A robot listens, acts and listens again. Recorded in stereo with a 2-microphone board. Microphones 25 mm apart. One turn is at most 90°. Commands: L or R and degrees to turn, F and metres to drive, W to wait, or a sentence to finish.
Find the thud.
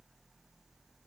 W
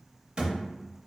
R35
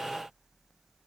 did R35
W
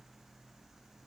I heard a thud, but can't make it out now. It was about straight ahead or 110° right.